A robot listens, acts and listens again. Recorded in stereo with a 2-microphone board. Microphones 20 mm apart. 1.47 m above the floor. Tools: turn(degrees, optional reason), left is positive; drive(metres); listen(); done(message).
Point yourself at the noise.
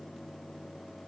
listen()
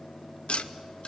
turn(degrees=90)
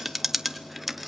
turn(degrees=-10, reason="So it is at 10° right.")
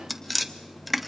done("Found it: tapping, straight ahead, under 1 m away.")